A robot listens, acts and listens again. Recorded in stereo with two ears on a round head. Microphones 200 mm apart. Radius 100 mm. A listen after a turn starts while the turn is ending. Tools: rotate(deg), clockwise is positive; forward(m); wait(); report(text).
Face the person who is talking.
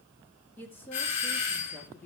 rotate(-30)
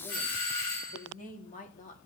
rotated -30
rotate(-140)
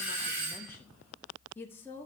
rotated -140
rotate(-10)
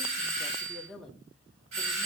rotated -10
report("Found it: a woman speaking, straight ahead, 1 to 2 m away.")